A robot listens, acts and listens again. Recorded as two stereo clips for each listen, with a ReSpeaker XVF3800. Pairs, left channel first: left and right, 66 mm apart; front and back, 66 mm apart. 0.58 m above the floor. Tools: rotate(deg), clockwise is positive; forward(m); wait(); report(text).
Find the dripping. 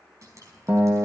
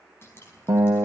rotate(55)
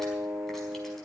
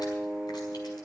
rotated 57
wait()
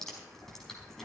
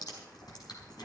report("Found it: dripping, straight ahead, over 4 m away.")